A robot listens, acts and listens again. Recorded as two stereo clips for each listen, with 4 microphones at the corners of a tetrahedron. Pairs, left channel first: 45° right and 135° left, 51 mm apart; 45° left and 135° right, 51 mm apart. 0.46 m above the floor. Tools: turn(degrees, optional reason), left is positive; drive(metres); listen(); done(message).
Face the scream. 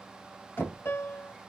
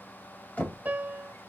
listen()
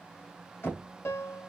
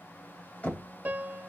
listen()
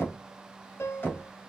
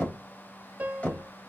done("I can't make out a scream to turn to.")